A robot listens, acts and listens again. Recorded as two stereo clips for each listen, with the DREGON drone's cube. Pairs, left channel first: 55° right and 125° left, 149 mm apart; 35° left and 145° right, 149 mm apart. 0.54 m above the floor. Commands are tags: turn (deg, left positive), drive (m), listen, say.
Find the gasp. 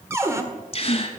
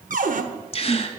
<turn deg="-10"/>
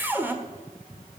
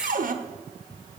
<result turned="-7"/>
<say>Facing where the gasp came from. I can't hear it now.</say>